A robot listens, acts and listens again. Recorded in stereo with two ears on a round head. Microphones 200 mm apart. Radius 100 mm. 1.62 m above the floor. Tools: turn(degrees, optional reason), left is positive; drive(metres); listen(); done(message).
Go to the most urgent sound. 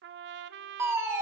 turn(degrees=-30)
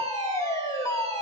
turn(degrees=15, reason="So it is at 15° left.")
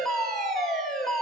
drive(metres=1.0)
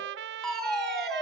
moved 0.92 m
drive(metres=1.0)
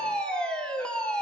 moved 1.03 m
drive(metres=1.0)
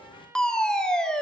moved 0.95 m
drive(metres=1.0)
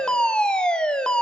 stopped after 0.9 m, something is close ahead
done("I am next to the fire alarm.")